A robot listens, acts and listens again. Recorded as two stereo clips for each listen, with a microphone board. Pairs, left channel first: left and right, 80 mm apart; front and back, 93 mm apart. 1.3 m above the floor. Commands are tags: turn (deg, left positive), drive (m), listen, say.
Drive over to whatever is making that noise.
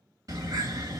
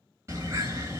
<turn deg="-125"/>
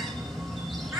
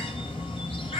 <drive m="1.0"/>
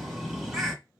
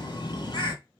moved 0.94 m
<turn deg="-10"/>
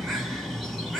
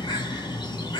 <drive m="1.0"/>
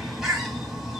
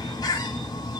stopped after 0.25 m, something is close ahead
<turn deg="-10"/>
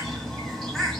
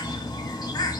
<say>Arrived at the bird, straight ahead.</say>